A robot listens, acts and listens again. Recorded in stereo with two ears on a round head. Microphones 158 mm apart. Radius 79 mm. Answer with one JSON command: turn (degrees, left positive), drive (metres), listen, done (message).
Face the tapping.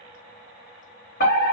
{"listen": true}
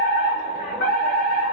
{"listen": true}
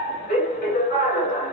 {"done": "I can't make out tapping, only a fire alarm."}